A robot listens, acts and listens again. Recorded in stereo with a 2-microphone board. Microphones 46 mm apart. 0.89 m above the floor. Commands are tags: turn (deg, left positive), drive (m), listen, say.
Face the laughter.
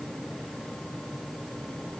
<listen/>
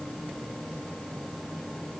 <listen/>
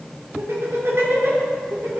<turn deg="-70"/>
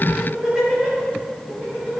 <turn deg="-25"/>
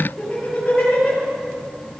<turn deg="15"/>
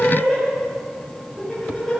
<say>Facing the laughter, over 4 m away.</say>